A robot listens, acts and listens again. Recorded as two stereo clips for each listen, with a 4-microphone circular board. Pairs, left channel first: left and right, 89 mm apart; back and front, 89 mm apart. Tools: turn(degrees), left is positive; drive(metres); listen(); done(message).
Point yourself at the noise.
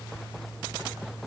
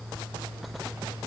listen()
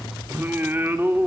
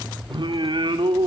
turn(degrees=-25)
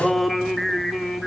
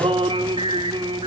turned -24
done("Found it: singing, straight ahead, 2 to 4 m away.")